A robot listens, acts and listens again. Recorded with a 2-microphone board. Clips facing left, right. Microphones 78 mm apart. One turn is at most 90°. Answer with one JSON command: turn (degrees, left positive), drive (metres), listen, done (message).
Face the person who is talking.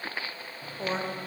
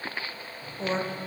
{"turn": 30}
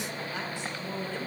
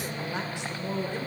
{"turn": -25}
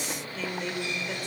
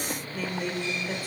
{"done": "Found it: a woman speaking, straight ahead, 1 to 2 m away."}